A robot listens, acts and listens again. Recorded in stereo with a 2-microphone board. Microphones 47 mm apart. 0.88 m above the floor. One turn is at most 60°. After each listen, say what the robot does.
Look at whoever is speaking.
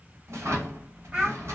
Turn 25° right.
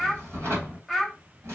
Found it: a child speaking, straight ahead, 1 to 2 m away.